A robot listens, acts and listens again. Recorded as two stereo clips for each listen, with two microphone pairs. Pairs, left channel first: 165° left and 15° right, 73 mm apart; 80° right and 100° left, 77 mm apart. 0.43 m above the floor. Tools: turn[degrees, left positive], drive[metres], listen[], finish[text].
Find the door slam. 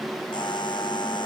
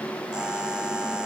Action: listen[]
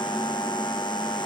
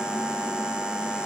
Action: listen[]
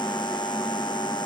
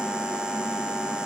Action: finish[I can't make out a door slam to turn to.]